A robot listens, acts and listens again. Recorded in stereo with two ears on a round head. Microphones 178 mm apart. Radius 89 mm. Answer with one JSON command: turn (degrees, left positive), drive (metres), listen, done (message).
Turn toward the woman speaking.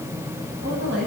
{"turn": -60}
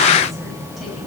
{"listen": true}
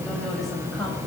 {"listen": true}
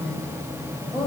{"done": "Facing the woman speaking, over 4 m away."}